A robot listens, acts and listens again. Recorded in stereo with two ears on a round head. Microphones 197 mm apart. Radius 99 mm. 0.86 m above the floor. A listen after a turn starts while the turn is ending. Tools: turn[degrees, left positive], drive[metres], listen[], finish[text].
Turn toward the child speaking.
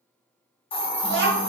Thought: The child speaking: about 50° right or 130° right.
Action: turn[-50]
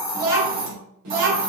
Thought: So it is at 85° right.
Action: turn[-85]
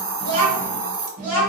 Thought: The child speaking is now 40° right.
Action: turn[-40]
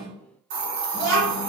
Thought: The child speaking is now 35° right.
Action: turn[-35]
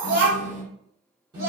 Thought: The child speaking is now 15° right.
Action: turn[-15]
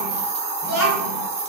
Action: finish[Found it: a child speaking, straight ahead, 2 to 4 m away.]